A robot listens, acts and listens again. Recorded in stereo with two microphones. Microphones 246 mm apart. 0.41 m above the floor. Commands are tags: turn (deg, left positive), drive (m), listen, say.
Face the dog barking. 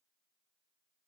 <listen/>
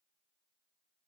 <listen/>
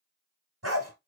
<turn deg="-90"/>
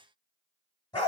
<turn deg="15"/>
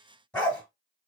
<say>Found it: a dog barking, straight ahead.</say>